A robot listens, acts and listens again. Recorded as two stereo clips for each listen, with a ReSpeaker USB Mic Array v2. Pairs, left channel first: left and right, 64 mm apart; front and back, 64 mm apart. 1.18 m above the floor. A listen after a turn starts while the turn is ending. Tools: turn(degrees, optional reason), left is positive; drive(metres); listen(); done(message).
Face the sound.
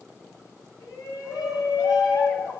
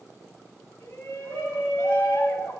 turn(degrees=65, reason="The shout: 65° left.")
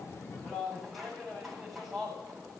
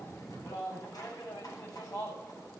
done("Found it: a shout, straight ahead.")